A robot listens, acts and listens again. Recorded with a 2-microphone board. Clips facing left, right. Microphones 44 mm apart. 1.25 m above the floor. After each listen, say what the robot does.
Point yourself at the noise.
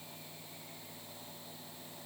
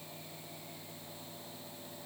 Keep listening.
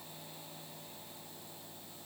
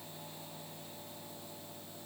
Keep listening.
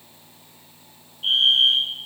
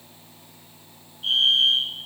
Turn 30° left.
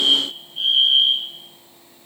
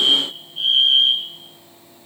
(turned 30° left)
Found it: a fire alarm, straight ahead.